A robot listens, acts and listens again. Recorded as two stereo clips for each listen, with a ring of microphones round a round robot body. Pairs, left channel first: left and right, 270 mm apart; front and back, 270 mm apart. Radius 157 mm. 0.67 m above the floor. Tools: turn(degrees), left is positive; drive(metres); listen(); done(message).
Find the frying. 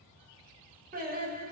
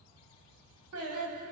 listen()
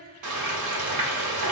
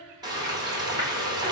turn(degrees=-105)
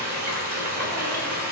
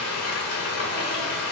turn(degrees=-35)
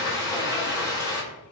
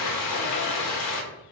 turn(degrees=10)
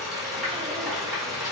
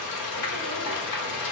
done("Facing the frying, 1 to 2 m away.")